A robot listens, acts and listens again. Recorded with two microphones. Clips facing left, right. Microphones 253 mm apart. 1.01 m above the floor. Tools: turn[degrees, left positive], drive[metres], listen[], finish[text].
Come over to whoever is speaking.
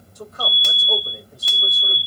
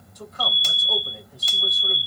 Thought: The man speaking: about 55° left or 125° left.
Action: turn[55]
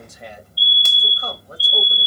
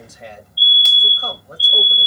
Action: drive[1.0]
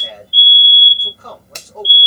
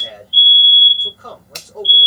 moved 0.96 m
Action: drive[1.0]
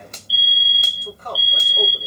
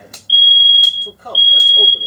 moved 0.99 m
Thought: The man speaking is now 10° right.
Action: turn[-10]
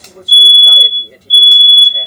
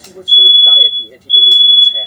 Action: drive[1.0]
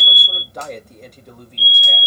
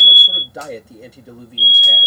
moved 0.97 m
Action: drive[1.0]
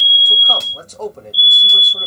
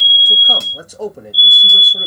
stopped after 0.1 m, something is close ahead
Thought: The man speaking is now 10° right.
Action: turn[-10]
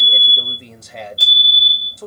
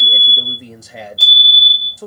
Action: finish[Arrived at the man speaking, straight ahead.]